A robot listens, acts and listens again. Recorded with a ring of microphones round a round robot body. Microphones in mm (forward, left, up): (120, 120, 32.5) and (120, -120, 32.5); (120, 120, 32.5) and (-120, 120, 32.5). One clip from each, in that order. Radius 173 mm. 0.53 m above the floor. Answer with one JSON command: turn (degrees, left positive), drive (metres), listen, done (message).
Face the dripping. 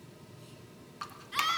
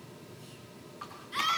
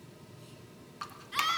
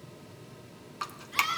{"turn": 140}
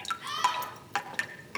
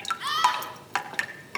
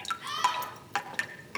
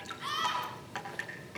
{"turn": -10}
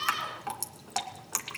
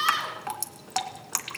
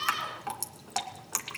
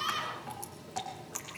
{"done": "Found it: dripping, straight ahead, 2 to 4 m away."}